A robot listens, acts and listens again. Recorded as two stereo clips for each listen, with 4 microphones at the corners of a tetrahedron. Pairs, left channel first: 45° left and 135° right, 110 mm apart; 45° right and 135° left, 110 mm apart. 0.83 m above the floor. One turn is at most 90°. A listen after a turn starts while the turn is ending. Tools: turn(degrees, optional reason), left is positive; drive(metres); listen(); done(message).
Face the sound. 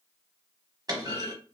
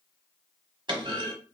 turn(degrees=90, reason="The clunk: 175° left.")
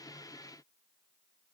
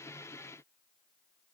turn(degrees=85, reason="Nothing new. It was at 85° left.")
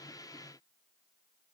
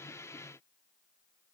done("I heard a clunk from this way, but can't make it out now.")